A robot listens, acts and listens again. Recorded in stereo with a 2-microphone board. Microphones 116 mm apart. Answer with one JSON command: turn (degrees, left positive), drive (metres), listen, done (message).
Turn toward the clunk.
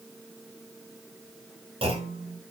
{"turn": -55}
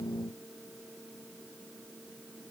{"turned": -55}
{"listen": true}
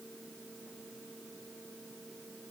{"done": "I heard a clunk, but can't make it out now. It was about straight ahead or 70° right."}